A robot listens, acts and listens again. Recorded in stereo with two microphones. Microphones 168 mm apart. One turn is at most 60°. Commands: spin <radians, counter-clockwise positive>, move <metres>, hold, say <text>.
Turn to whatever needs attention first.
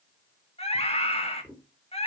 spin 0.61
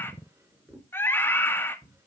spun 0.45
spin 0.26
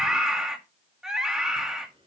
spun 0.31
say Found it: a scream, straight ahead, 1 to 2 m away.